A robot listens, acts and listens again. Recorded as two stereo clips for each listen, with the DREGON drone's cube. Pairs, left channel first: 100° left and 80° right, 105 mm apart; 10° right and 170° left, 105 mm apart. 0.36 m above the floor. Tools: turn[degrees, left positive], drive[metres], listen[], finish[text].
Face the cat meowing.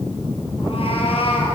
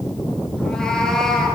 Thought: The cat meowing: 75° left.
Action: turn[75]
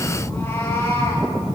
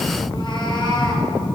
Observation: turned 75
Thought: The cat meowing is now 35° left.
Action: turn[35]
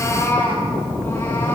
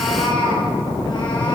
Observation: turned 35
Thought: The cat meowing is now 30° left.
Action: turn[30]
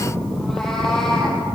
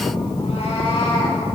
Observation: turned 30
Thought: The cat meowing is now 15° left.
Action: turn[15]
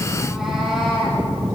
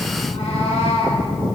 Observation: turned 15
Action: finish[Found it: a cat meowing, straight ahead.]